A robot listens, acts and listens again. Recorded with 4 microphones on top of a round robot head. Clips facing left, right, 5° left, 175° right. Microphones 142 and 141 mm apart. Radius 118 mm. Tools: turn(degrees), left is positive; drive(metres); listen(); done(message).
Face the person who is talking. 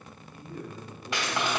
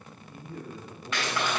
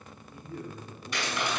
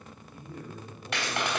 turn(degrees=-120)
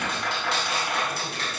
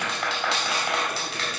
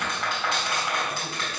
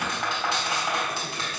listen()
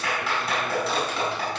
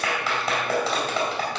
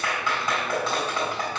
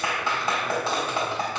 listen()
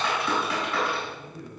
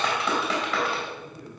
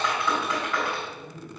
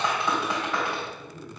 turn(degrees=-20)
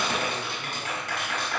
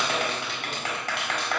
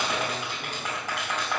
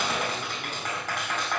listen()
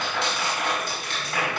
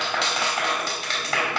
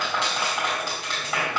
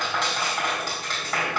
listen()
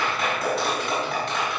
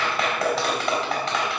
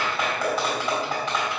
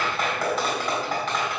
done("I heard a man speaking from this way, but can't make it out now.")